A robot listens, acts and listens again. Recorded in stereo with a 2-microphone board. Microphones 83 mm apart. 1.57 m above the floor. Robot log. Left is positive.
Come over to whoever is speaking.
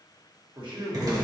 note: The man speaking: about 60° right or 120° right.
cmd yaw -60
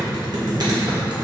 cmd idle
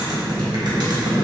cmd idle
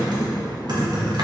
end: I heard a man speaking, but can't make it out now. It was about straight ahead or 60° right. I did not reach it.